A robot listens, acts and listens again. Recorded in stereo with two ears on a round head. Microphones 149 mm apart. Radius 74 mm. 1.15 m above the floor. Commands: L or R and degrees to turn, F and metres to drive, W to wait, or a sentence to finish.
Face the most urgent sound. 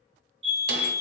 R30
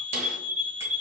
R110
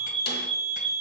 L40
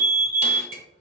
R15
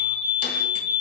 Found it: a fire alarm, straight ahead, 2 to 4 m away.